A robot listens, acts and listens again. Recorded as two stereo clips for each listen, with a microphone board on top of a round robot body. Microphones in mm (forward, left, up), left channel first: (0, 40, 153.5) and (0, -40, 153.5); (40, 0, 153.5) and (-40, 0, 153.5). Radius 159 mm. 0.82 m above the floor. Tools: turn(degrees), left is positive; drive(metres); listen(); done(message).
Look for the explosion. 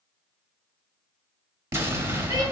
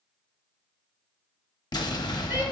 turn(degrees=-35)
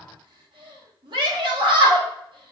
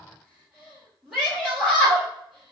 done("Facing where the explosion came from. I can't hear it now.")